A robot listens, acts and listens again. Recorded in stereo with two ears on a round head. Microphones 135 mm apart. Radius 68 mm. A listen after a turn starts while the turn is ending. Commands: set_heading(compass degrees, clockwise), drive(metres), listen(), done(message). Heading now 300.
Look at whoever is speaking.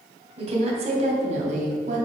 set_heading(355)
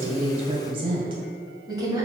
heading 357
set_heading(17)
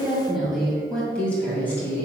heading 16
set_heading(1)
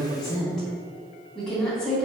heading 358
done("Facing the woman speaking.")